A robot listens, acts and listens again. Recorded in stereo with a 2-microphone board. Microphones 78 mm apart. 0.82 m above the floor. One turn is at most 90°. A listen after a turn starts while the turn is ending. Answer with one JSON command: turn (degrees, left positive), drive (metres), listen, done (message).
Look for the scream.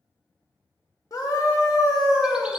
{"turn": 50}
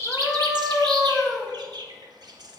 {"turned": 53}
{"done": "Found it: a scream, straight ahead."}